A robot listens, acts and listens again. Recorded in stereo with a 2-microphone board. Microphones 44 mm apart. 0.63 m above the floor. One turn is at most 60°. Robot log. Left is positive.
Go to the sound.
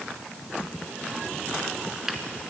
cmd yaw -30
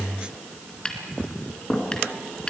note: So it is at 20° left.
cmd yaw +20
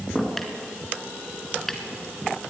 cmd fwd 1.0
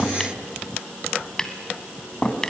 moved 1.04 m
note: The tapping is now 15° left.
cmd yaw +15
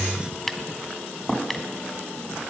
cmd fwd 1.0
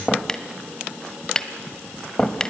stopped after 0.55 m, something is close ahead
note: The tapping is now 15° left.
cmd yaw +15
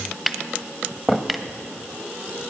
end: Arrived at the tapping, straight ahead.